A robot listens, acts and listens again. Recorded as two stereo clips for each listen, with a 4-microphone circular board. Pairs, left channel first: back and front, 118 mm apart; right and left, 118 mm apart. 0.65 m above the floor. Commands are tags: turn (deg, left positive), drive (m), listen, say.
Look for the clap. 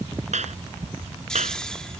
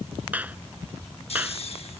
<turn deg="15"/>
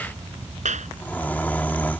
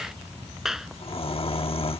<say>Facing the clap.</say>